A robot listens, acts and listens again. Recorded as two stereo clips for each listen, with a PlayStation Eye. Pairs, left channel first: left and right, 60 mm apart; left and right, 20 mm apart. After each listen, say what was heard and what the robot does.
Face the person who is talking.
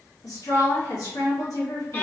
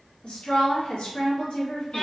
Turn 90° left.
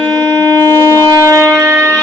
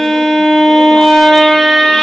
Keep listening.
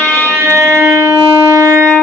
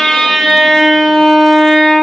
Keep listening.
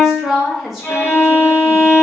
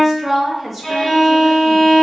Found it: a woman speaking, straight ahead, 1 to 2 m away.